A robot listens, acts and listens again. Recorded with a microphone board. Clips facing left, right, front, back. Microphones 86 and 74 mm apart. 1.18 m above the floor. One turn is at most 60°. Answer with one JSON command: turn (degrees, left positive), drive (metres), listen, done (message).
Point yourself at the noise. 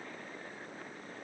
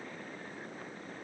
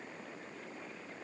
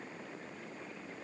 {"listen": true}
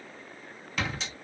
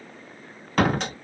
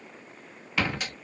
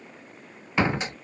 {"turn": -60}
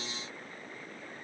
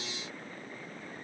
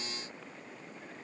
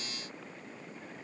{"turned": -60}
{"turn": -55}
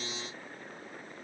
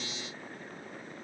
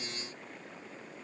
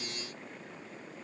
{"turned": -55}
{"done": "Facing where the door slam came from. I can't hear it now."}